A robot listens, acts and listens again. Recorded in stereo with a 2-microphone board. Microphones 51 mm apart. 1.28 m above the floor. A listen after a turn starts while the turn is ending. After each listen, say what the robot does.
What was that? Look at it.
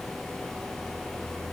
Keep listening.
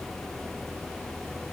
Keep listening.
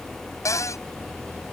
Turn 90° left.
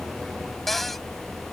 Found it: a cupboard door, straight ahead.